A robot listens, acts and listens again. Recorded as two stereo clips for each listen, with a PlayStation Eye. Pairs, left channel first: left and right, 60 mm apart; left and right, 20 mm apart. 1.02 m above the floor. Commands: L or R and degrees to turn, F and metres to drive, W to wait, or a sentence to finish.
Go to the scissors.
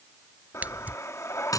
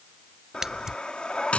R25
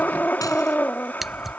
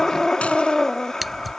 F1.0
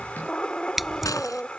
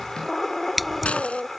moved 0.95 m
F1.0
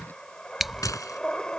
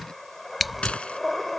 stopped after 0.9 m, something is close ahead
I am next to the scissors.